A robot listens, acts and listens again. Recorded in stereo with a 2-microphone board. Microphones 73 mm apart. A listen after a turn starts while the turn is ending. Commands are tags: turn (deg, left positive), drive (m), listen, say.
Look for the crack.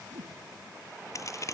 <turn deg="45"/>
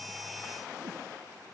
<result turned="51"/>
<listen/>
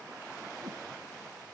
<say>I heard a crack, but can't make it out now. It was about 5° right or 85° left.</say>